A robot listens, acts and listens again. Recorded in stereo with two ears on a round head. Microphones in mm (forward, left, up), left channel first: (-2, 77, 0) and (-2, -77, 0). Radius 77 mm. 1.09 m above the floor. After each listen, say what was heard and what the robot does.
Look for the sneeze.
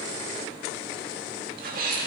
The sneeze: about 55° right or 125° right. Turn 55° right.
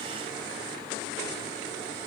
Keep listening.
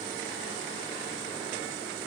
I heard a sneeze, but can't make it out now. It was about straight ahead or 70° right.